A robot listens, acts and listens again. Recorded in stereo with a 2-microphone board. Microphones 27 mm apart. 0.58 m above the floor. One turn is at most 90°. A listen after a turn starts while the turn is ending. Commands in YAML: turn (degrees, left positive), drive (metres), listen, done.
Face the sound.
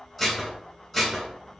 turn: 30
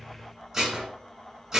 turn: -25
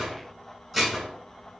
done: "Facing the dishes clattering."